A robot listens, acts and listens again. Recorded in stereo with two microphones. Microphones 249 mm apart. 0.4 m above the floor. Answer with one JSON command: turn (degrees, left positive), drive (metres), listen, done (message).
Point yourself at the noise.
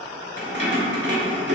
{"turn": -45}
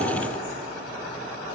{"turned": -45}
{"listen": true}
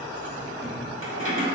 {"turn": -80}
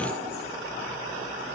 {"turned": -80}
{"listen": true}
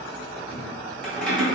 {"done": "Found it: keys jangling, straight ahead."}